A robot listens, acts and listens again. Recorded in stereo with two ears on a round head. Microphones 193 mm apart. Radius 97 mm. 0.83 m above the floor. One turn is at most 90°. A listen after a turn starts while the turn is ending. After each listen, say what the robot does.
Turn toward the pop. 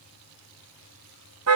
Keep listening.
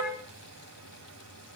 Keep listening.
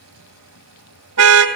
I can't make out a pop, only a car horn.